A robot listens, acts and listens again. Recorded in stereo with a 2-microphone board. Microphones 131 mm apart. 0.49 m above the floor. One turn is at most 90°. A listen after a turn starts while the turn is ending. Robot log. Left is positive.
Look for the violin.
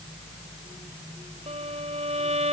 note: The violin: about 60° right or 120° right.
cmd yaw -60
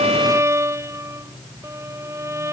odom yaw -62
note: So it is at 25° right.
cmd yaw -25
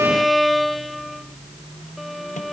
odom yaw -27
end: Found it: a violin, straight ahead.